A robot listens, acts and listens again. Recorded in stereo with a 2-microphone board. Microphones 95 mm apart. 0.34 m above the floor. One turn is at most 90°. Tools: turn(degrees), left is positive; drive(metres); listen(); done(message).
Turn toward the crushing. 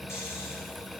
listen()
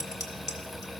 listen()
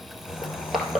turn(degrees=30)
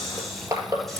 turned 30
turn(degrees=-30)
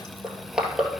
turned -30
turn(degrees=-10)
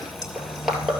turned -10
done("Facing the crushing.")